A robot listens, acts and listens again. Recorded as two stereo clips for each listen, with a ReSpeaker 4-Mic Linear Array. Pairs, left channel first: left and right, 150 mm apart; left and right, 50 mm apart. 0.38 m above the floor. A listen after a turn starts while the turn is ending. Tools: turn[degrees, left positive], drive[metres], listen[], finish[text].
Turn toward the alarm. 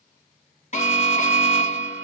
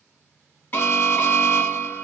Thought: The alarm: about 50° left or 130° left.
Action: turn[50]
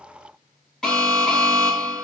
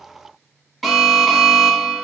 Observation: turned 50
Action: finish[Found it: an alarm, straight ahead.]